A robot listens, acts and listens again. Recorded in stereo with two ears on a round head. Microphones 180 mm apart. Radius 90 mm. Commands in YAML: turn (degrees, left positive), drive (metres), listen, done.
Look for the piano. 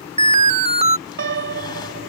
turn: -60
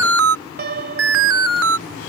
turn: -55
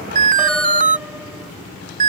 listen: true
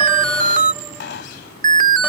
listen: true
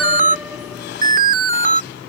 done: "I heard a piano from this way, but can't make it out now."